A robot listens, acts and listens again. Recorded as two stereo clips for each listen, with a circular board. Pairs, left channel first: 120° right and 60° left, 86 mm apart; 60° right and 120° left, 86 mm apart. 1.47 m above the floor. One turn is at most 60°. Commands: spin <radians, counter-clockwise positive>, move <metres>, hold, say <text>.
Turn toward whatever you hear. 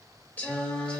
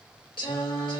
spin -0.79
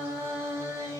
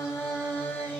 spin 0.17
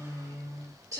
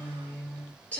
spin 0.26
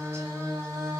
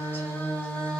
spin 0.26
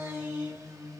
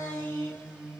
spin 0.17
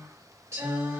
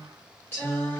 spin 0.17
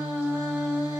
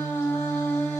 say Found it: singing, straight ahead, 2 to 4 m away.